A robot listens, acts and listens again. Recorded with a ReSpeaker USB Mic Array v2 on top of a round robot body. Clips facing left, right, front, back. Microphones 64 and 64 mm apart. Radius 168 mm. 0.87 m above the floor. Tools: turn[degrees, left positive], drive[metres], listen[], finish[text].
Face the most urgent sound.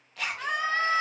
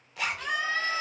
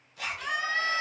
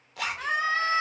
Thought: The scream: 130° left.
Action: turn[130]
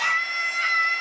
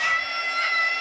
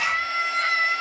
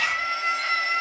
Thought: The scream is now 10° left.
Action: turn[10]
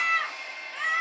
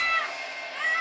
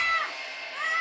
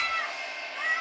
Action: finish[Facing the scream, under 1 m away.]